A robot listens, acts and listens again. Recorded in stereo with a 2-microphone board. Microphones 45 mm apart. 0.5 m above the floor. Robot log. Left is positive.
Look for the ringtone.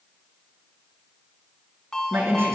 cmd yaw +30
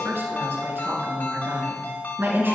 note: So it is at 135° left.
cmd yaw +135
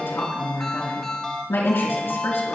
note: The ringtone is now 10° left.
cmd yaw +10
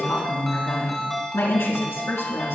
end: Facing the ringtone.